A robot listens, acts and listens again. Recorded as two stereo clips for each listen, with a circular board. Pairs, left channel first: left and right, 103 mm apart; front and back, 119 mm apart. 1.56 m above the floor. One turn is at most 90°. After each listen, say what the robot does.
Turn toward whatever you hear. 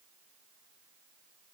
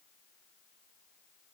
Keep listening.
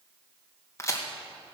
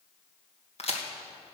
Turn 30° left.
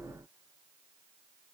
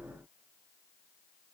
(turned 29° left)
I heard a crack from this way, but can't make it out now.